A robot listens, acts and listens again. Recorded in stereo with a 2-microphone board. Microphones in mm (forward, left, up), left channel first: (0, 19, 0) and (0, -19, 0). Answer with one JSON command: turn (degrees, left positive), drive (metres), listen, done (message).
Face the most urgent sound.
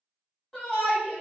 {"turn": 30}
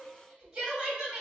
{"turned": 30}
{"turn": -20}
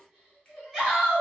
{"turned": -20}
{"done": "Facing the shout, 1 to 2 m away."}